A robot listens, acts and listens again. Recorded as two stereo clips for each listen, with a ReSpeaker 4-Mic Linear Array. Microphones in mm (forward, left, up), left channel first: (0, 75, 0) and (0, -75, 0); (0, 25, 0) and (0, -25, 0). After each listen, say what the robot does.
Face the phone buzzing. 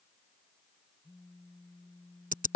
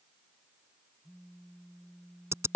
Turn 25° left.
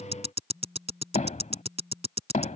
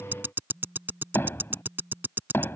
Facing the phone buzzing.